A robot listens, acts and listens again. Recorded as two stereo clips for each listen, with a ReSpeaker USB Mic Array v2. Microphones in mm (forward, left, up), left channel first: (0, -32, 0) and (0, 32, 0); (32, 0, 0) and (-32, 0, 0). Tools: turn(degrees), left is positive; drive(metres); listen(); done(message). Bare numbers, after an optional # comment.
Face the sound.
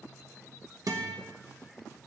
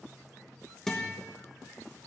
# The guitar: 85° left.
turn(85)
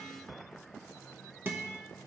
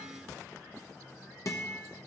# The guitar is now 35° left.
turn(35)
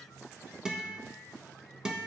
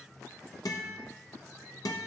# The guitar is now 10° left.
turn(10)
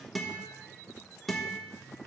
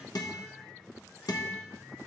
done("Found it: a guitar, straight ahead, 1 to 2 m away.")